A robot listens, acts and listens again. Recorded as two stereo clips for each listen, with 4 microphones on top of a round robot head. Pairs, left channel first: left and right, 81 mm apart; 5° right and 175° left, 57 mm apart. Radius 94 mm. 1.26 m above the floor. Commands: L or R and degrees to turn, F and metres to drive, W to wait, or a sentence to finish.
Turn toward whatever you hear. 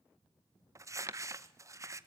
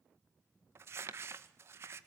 R140
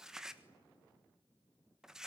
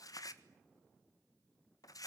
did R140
Facing the crumpling, 1 to 2 m away.